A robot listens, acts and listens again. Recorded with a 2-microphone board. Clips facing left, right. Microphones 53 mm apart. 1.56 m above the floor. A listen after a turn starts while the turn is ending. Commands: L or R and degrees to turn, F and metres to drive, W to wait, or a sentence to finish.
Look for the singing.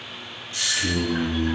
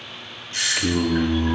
R50
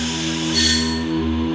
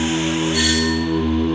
R20
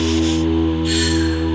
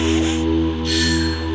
L20
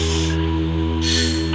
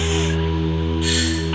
L10
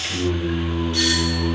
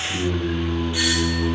L10
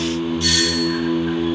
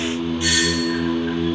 Found it: singing, straight ahead, 2 to 4 m away.